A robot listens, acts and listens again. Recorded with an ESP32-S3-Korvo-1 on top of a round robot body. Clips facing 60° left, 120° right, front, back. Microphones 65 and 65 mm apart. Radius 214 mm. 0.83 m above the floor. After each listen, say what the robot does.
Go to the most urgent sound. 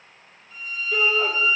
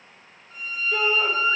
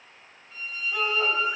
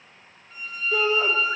Turn 150° left.
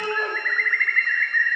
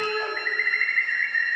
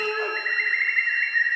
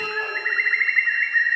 Drive 1.0 m forward.
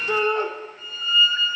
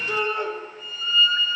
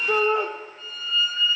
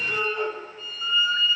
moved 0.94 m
Turn 10° left.
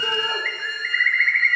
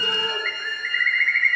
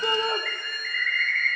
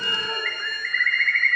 Drive 1.0 m forward.
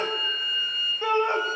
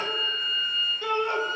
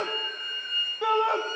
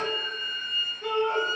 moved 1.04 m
Drive 1.0 m forward.
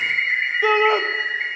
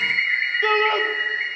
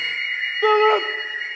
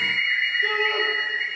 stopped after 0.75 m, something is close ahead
Turn 15° right.
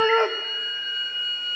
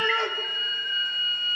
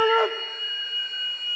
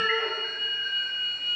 Arrived at the shout, straight ahead.